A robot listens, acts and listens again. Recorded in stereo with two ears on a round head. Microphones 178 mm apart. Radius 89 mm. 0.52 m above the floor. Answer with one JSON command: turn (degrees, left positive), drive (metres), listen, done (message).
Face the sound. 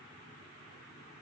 {"listen": true}
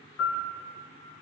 {"turn": 90}
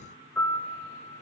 {"turn": 10}
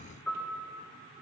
{"done": "Facing the piano, 1 to 2 m away."}